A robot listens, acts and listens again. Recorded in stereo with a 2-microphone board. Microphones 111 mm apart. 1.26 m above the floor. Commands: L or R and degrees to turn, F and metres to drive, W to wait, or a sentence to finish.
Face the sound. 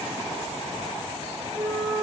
R25
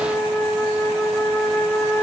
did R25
Found it: a flute, straight ahead, 2 to 4 m away.